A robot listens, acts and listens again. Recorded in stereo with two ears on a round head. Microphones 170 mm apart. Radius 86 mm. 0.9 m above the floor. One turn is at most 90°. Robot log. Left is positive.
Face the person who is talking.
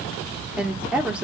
cmd yaw -30
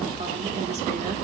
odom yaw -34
cmd idle
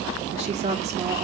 note: So it is at 140° right.
cmd yaw -90
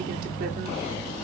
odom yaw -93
note: Nothing new. It was at 50° right.
cmd yaw -50
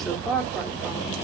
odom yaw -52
end: Found it: a woman speaking, straight ahead.